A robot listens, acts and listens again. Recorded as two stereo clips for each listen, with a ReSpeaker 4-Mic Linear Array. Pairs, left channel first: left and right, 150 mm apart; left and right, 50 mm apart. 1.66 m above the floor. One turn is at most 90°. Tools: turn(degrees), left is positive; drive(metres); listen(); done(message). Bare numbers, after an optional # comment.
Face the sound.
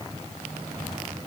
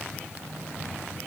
listen()
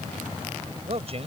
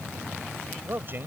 # The man speaking: about 40° right or 140° right.
turn(-40)
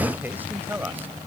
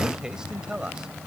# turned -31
# So it is at 10° right.
turn(-10)
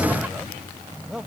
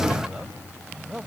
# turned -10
done("Found it: a man speaking, straight ahead.")